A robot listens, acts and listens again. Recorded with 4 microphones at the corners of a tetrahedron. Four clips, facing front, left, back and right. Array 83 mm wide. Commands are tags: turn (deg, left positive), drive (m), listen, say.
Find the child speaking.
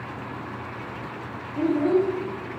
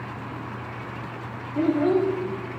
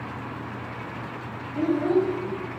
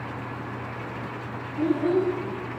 <turn deg="105"/>
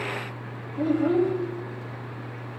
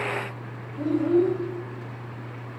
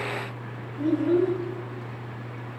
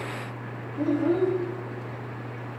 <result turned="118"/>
<turn deg="-10"/>
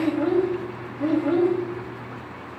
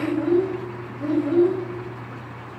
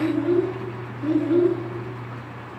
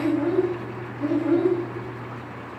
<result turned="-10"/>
<say>Facing the child speaking, over 4 m away.</say>